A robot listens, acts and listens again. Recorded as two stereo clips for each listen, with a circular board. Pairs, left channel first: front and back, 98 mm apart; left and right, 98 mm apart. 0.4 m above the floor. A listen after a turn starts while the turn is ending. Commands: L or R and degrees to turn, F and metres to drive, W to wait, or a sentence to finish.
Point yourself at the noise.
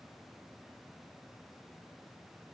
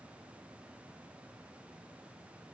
W
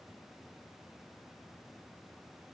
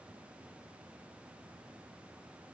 W
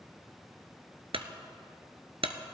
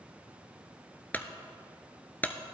L160
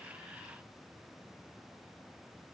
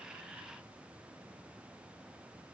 Facing where the clunk came from. I can't hear it now.